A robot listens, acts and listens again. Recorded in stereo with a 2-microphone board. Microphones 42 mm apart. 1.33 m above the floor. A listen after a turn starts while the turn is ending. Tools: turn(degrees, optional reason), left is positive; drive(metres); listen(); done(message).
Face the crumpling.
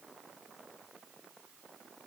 listen()
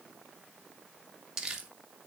turn(degrees=-30)
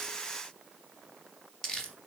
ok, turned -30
turn(degrees=15, reason="So it is at 15° left.")
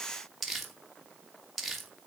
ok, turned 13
done("Facing the crumpling, 1 to 2 m away.")